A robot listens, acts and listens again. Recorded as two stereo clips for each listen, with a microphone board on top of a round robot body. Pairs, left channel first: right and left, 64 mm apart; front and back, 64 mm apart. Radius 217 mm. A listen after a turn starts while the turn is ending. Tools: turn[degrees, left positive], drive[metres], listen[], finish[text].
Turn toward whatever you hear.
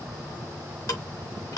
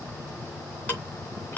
Thought: The ticking: 65° right.
Action: turn[-65]
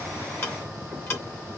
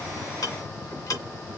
Thought: The ticking is now 35° right.
Action: turn[-35]
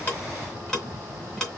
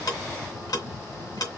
Thought: The ticking is now 10° right.
Action: turn[-10]
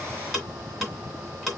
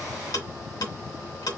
Action: finish[Facing the ticking.]